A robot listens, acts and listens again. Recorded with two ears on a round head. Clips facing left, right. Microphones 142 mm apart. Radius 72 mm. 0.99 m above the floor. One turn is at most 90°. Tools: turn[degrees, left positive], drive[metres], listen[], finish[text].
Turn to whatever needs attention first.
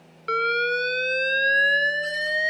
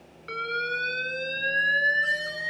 Thought: The alarm: about 60° left or 120° left.
Action: turn[60]
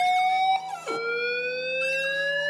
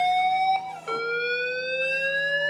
Action: finish[Facing the alarm.]